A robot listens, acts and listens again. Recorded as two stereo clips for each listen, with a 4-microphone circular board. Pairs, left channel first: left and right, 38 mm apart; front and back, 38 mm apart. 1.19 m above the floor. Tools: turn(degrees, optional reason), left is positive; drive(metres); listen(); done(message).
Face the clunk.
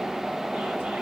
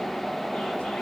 listen()
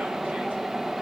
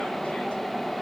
listen()
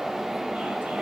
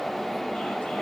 done("I can't make out a clunk to turn to.")